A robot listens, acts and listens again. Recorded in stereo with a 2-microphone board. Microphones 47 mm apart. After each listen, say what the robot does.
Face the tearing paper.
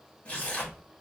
Turn 25° left.
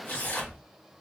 Turn 130° left.
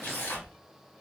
Turn 60° left.
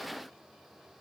Keep listening.
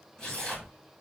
Turn 15° left.
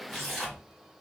Facing the tearing paper.